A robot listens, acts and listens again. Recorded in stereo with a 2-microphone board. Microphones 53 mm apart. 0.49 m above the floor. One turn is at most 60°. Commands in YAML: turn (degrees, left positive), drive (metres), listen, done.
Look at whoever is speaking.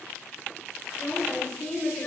turn: 30
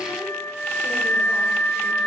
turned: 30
listen: true
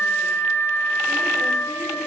listen: true
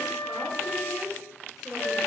turn: -10
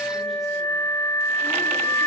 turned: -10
listen: true
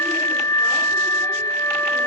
listen: true
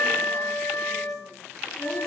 done: "I heard a woman speaking from this way, but can't make it out now."